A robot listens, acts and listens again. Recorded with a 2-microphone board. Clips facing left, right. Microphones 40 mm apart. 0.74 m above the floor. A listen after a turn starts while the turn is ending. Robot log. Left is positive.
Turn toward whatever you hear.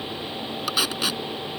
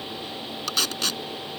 cmd yaw +30
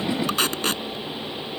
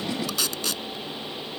note: So it is at 140° left.
cmd yaw +140
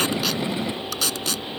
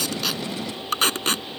note: The tape being pulled is now 45° right.
cmd yaw -45
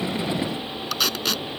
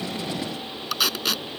end: Facing the tape being pulled.